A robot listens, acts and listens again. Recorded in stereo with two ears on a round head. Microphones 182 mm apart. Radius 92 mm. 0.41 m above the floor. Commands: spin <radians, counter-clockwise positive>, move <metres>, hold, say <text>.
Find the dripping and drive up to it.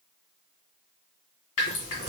spin 1.31
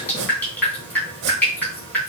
spin 0.17
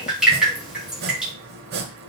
move 1.0
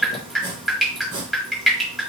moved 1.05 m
move 1.0
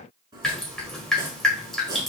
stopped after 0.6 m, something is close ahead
say I am next to the dripping.